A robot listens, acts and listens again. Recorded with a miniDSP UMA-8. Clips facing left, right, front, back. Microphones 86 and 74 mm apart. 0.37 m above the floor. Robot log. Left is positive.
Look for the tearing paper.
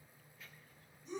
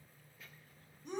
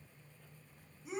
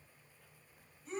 cmd idle
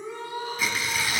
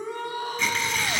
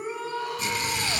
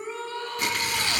note: The tearing paper: 175° left.
cmd yaw +175
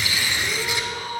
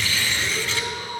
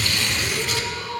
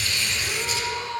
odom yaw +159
note: The tearing paper is now 15° left.
cmd yaw +15
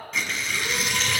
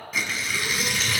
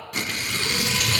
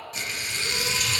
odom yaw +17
end: Facing the tearing paper, under 1 m away.